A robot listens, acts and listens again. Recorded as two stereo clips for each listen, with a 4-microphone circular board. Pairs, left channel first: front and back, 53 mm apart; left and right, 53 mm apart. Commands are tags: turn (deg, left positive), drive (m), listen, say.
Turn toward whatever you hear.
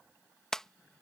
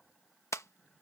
<turn deg="80"/>
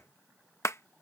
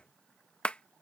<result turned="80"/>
<turn deg="25"/>
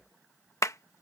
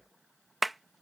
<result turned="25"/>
<say>Found it: a clap, straight ahead.</say>